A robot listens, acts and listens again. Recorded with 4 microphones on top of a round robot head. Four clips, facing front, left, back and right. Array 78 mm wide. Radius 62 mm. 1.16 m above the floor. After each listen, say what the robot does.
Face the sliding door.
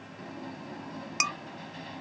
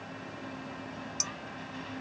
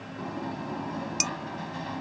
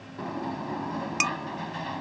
Turn 105° right.
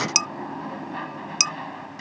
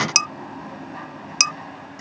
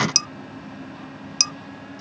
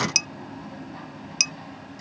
Turn 15° left.
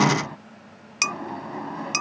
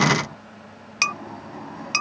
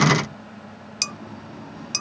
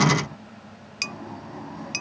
Found it: a sliding door, straight ahead.